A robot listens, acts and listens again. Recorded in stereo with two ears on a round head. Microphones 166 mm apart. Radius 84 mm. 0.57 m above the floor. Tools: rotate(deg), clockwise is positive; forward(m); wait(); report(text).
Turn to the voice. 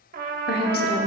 rotate(-60)
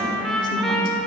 wait()
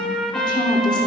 rotate(-30)
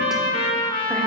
wait()
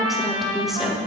report("Found it: a woman speaking, straight ahead.")